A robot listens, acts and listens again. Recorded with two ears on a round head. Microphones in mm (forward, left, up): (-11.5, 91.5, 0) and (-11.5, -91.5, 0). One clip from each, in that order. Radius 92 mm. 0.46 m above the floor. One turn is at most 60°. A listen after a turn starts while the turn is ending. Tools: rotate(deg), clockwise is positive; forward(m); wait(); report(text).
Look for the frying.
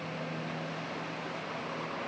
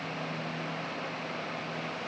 wait()
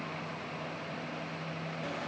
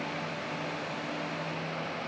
wait()
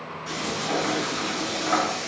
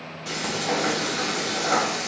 rotate(50)
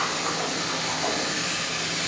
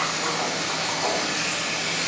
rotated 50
report("Facing the frying.")